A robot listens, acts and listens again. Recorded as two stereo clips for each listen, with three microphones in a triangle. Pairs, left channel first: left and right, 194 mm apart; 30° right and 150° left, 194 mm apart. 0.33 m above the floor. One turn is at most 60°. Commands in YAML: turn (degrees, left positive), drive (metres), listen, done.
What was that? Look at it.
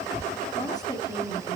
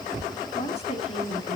turn: 30
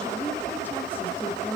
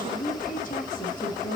turn: 15
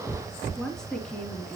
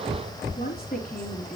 done: "Found it: a woman speaking, straight ahead, 2 to 4 m away."